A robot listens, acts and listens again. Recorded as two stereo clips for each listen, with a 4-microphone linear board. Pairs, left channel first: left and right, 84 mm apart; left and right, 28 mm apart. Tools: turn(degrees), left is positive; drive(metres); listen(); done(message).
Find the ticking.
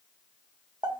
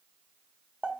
listen()
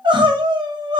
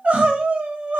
listen()
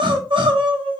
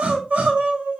done("I can't make out ticking to turn to.")